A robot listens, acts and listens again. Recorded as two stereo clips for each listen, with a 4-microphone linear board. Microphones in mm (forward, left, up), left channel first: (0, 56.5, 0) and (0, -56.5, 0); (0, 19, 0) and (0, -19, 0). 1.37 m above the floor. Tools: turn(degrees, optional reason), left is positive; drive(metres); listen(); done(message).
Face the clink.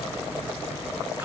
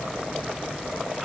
listen()
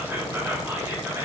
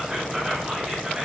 listen()
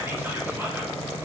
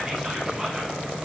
done("I can't make out a clink to turn to.")